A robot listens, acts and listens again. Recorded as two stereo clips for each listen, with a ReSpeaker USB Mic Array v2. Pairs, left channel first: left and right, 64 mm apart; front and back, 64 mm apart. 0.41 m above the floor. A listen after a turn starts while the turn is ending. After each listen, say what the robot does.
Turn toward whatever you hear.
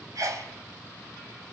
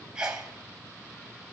Turn 105° right.
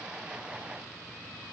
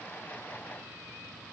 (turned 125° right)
Turn 20° left.
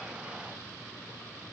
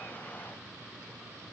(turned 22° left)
I heard a sneeze from this way, but can't make it out now.